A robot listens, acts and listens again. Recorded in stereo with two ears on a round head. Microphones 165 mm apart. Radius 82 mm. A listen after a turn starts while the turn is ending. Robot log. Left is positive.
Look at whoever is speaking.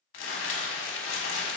cmd idle
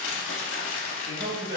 note: The man speaking: about 60° right or 120° right.
cmd yaw -60
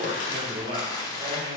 note: So it is at 40° right.
cmd yaw -40
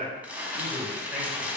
end: Found it: a man speaking, straight ahead.